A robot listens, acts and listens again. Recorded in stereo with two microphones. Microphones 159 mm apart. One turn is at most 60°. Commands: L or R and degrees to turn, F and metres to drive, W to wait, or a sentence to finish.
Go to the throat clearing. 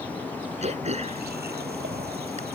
R45
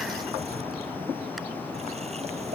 W
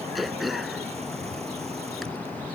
F1.0
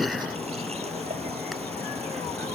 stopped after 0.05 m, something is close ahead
Something is in my way. I am facing the throat clearing but have not reached it.